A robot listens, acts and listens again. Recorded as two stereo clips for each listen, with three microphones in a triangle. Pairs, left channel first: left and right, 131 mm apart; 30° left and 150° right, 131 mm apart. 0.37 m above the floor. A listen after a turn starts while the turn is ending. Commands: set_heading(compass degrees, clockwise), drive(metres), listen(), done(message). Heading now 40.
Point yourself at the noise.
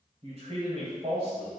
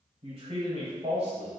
set_heading(160)
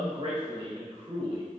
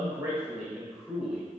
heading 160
set_heading(230)
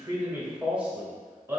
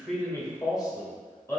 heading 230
set_heading(260)
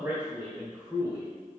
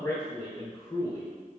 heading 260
set_heading(280)
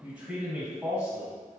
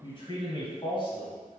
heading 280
set_heading(290)
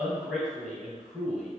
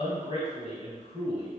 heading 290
done("Found it: a man speaking, straight ahead, 1 to 2 m away.")